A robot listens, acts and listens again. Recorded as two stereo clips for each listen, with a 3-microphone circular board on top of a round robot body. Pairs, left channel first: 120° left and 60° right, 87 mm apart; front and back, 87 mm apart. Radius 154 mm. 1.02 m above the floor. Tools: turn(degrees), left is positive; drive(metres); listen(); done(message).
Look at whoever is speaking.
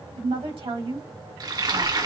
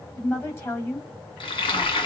turn(degrees=-65)
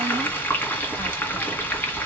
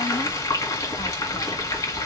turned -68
listen()
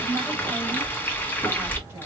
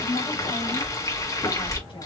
listen()
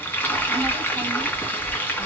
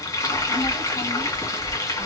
done("I heard a woman speaking from this way, but can't make it out now.")